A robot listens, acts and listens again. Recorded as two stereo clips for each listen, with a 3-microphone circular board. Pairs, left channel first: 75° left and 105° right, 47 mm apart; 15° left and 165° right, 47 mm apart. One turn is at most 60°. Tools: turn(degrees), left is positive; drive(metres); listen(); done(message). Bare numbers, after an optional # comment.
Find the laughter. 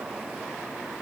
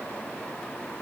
listen()
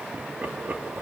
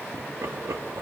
# The laughter: 160° right.
turn(-60)
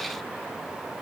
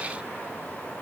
# Nothing new. It was at 100° right.
turn(-60)
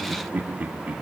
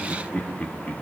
# The laughter is now 50° right.
turn(-50)
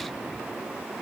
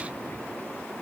listen()
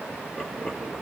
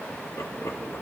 done("Facing the laughter, 2 to 4 m away.")